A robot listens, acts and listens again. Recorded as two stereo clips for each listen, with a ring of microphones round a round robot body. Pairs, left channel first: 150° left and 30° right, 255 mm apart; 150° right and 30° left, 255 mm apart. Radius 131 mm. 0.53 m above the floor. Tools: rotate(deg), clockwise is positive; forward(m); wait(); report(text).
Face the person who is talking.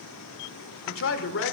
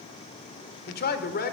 rotate(-165)
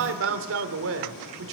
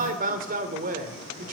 rotate(20)
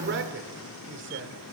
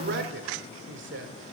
report("Found it: a man speaking, straight ahead, 2 to 4 m away.")